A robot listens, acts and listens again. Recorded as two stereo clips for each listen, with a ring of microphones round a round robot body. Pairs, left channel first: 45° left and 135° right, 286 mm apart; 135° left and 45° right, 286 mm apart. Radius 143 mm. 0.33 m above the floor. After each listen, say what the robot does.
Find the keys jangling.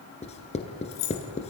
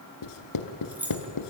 Turn 40° left.
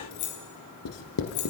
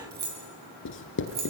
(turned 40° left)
Turn 15° left.
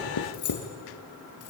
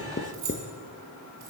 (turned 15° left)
Facing the keys jangling.